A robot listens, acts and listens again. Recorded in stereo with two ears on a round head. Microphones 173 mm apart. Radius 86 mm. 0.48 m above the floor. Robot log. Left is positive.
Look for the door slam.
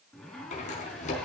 note: The door slam: about 40° left or 140° left.
cmd yaw +40
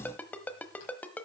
cmd idle
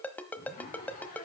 end: I heard a door slam, but can't make it out now. It was about straight ahead or 100° left.